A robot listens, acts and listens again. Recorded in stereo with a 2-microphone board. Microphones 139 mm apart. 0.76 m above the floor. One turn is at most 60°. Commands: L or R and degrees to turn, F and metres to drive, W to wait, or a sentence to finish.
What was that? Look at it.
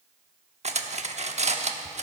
R55
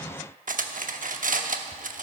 R60
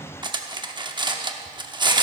R35
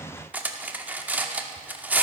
R10
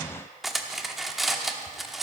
Facing the cutlery clinking.